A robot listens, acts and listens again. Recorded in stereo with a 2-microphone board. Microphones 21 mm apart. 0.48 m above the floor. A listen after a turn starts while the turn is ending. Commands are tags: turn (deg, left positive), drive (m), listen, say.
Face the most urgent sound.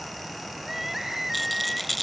<turn deg="-30"/>
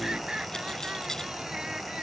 <turn deg="-135"/>
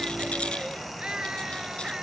<turn deg="-40"/>
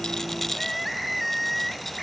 <say>Found it: crying, straight ahead.</say>